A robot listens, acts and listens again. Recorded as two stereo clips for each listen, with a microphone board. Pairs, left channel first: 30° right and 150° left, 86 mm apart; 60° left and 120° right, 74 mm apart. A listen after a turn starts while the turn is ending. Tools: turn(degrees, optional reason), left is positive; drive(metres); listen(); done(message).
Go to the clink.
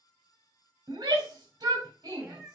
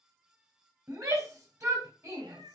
listen()
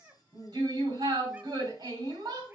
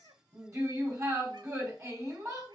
listen()
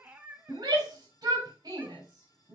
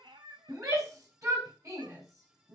done("I can't make out a clink, only a cat meowing and a shout.")